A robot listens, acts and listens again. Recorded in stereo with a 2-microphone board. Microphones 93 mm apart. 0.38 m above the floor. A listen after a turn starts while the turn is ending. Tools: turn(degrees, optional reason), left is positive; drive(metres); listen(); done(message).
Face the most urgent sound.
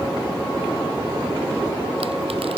listen()
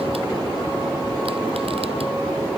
listen()
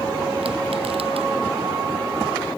done("I can't make out anything urgent to turn to.")